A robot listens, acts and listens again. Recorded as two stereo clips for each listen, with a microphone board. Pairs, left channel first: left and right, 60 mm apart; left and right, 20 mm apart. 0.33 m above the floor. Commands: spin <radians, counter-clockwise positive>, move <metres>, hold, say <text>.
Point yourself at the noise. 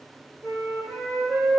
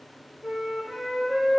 spin -0.96
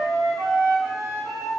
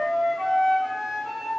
spin -1.13
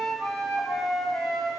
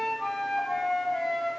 say Found it: a flute, straight ahead.